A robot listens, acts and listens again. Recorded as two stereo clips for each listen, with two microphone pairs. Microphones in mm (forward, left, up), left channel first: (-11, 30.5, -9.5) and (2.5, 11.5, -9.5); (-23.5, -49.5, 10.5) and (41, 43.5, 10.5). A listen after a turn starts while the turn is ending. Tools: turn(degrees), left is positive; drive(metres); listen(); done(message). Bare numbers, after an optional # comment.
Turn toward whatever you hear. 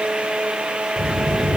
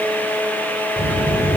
# The child speaking: 145° right.
turn(-145)
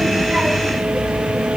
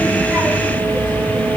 # The child speaking is now 10° left.
turn(10)
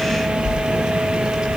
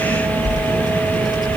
done("Found it: a child speaking, straight ahead.")